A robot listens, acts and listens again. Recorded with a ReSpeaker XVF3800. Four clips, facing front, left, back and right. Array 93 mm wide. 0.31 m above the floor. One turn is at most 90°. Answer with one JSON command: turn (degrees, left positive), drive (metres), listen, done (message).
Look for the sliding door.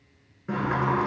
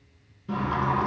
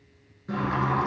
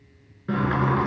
{"turn": -70}
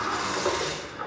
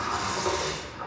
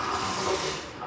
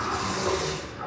{"done": "Facing the sliding door."}